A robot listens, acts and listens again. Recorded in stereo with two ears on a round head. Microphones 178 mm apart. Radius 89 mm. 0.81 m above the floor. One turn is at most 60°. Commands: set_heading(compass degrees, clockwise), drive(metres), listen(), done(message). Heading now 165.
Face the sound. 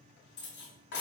set_heading(105)
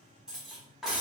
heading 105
done("Facing the cutlery clinking, under 1 m away.")